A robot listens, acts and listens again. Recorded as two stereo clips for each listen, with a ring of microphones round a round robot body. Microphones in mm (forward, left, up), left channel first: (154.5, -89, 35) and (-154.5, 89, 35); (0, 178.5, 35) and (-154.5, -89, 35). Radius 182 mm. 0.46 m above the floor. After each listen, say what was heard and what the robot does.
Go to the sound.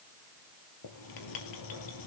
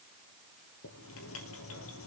Drive 1.0 m forward.
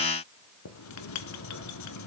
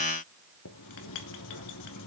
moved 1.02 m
The writing is now 15° left. Turn 15° left.
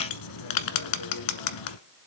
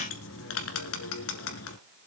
Drive 1.0 m forward.
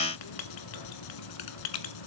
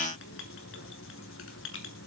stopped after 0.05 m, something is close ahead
I am next to the writing.